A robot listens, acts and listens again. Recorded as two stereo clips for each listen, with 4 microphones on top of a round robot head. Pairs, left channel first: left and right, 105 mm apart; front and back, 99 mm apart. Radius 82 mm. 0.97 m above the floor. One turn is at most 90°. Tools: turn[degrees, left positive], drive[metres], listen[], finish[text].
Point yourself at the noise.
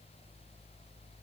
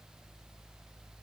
Action: listen[]
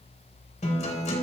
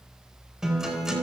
Thought: The guitar: 100° left.
Action: turn[90]
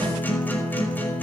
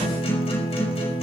Thought: The guitar is now 20° left.
Action: turn[20]
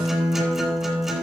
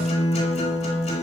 Action: finish[Facing the guitar.]